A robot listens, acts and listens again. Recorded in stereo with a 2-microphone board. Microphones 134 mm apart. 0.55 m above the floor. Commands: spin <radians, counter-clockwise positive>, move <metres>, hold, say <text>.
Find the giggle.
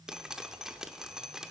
hold
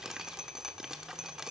hold
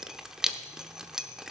say I can't make out a giggle, only dripping.